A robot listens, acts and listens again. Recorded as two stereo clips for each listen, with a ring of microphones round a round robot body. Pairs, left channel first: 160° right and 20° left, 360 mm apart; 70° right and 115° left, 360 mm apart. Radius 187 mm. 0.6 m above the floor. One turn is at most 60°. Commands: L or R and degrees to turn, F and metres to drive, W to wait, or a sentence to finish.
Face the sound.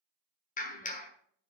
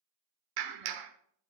L60
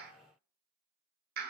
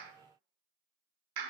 L60
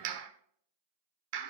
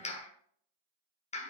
Found it: a clap, straight ahead, 1 to 2 m away.